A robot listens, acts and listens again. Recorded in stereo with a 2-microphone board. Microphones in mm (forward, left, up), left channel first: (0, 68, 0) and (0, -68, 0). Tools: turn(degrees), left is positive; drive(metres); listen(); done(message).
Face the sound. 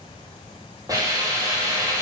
turn(degrees=-25)
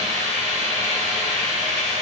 turn(degrees=-130)
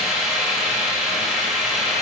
done("Facing the hiss, 2 to 4 m away.")